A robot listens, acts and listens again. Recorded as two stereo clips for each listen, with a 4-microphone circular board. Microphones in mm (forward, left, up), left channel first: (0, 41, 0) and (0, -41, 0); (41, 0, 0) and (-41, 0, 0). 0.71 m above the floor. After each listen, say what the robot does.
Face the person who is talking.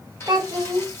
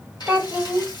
Turn 115° right.
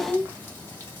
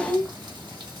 Turn 10° left.
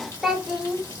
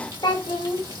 Facing the child speaking.